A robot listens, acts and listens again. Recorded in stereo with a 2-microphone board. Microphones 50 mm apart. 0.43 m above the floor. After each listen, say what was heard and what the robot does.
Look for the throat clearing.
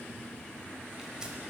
Keep listening.
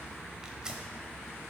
Keep listening.
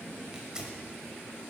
I can't make out throat clearing to turn to.